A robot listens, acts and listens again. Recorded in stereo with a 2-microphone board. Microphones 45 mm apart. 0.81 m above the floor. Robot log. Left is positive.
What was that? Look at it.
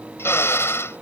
note: The drill: about 65° left or 115° left.
cmd yaw +65
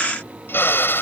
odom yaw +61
note: So it is at 55° left.
cmd yaw +55
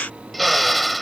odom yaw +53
end: Facing the drill.